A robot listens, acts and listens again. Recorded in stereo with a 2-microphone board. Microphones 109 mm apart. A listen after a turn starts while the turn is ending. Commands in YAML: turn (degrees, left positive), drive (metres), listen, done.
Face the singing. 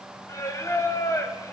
turn: 30
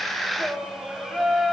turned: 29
done: "Found it: singing, straight ahead, 2 to 4 m away."